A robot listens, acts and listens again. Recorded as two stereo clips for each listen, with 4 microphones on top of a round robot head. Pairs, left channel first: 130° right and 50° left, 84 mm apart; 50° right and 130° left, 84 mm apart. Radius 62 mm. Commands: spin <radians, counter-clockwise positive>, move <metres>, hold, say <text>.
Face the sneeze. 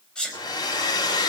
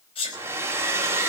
spin -0.87
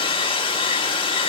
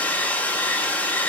say I heard a sneeze from this way, but can't make it out now.